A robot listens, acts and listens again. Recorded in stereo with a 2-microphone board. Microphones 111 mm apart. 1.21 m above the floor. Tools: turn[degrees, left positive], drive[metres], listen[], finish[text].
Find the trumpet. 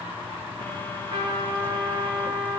Thought: The trumpet: about 45° right or 135° right.
Action: turn[-45]
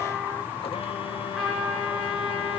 Action: finish[Facing the trumpet, over 4 m away.]